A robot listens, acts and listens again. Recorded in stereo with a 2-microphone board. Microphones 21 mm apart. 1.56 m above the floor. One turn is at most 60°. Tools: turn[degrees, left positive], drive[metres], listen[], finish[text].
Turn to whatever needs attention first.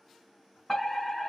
Thought: The fire alarm: about 20° left or 160° left.
Action: turn[20]
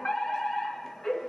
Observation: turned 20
Thought: So it is at 140° left.
Action: turn[60]
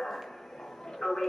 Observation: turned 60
Thought: The fire alarm is now 95° left.
Action: turn[60]
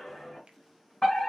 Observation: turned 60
Thought: The fire alarm is now 35° left.
Action: turn[35]
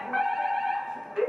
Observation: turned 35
Thought: The fire alarm is now 10° right.
Action: turn[-10]
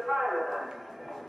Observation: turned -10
Action: finish[Facing the fire alarm, 2 to 4 m away.]